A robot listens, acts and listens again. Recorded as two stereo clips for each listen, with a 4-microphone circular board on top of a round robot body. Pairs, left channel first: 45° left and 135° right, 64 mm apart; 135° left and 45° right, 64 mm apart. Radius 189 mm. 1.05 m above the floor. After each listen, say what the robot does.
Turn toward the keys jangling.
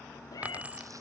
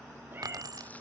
Turn 65° right.
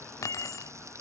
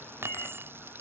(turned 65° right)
Turn 10° left.
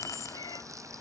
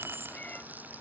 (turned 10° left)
Turn 10° left.
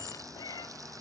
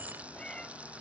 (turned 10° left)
Turn 15° left.
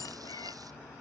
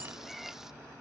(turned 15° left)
Keep listening.
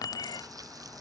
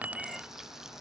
Turn 25° left.
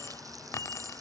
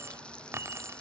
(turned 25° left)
Facing the keys jangling.